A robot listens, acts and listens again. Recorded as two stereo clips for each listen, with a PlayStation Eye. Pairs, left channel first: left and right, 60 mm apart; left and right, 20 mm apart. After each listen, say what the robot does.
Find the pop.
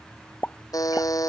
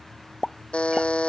Turn 30° left.
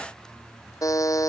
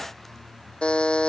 Keep listening.
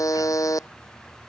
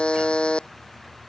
I heard a pop, but can't make it out now. It was about straight ahead or 120° left.